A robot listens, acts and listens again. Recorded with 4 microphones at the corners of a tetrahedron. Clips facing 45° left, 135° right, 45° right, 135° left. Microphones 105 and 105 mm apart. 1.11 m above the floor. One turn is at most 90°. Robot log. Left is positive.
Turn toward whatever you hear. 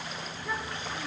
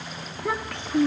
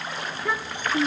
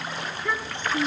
note: The child speaking: 115° right.
cmd yaw -90
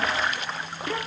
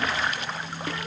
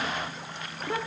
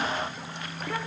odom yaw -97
note: The child speaking is now 20° left.
cmd yaw +20
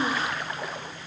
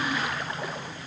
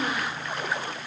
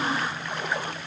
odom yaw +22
cmd idle
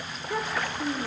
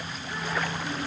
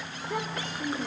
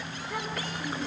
note: The child speaking is now 20° left.
cmd yaw +20
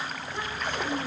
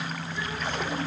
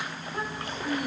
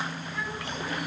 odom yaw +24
end: Found it: a child speaking, straight ahead, 2 to 4 m away.